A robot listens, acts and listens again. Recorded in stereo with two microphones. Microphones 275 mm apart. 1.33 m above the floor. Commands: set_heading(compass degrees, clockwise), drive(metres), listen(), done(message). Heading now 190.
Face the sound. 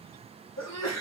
set_heading(120)
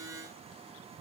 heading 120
listen()
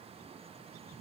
done("I heard a sneeze, but can't make it out now. It was about straight ahead or 40° left.")